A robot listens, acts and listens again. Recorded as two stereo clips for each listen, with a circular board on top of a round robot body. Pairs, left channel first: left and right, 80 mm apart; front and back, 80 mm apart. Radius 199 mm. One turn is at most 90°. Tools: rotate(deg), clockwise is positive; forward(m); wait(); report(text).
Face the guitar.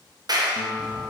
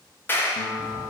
rotate(-20)
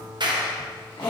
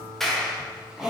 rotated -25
report("Found it: a guitar, straight ahead, 1 to 2 m away.")